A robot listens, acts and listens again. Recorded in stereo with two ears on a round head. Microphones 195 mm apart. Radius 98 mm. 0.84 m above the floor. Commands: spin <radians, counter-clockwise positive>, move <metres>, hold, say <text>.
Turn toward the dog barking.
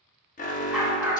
spin -0.52
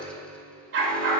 spin -2.09
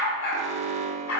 spin 1.13
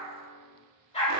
spin 0.52
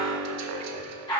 spin 0.35
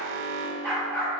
say Facing the dog barking.